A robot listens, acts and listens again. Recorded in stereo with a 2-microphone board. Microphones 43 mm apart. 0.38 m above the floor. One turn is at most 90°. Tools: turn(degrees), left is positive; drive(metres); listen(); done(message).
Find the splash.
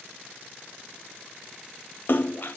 turn(degrees=50)
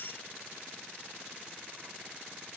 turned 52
listen()
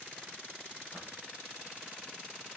done("I heard a splash, but can't make it out now. It was about 5° right or 80° left.")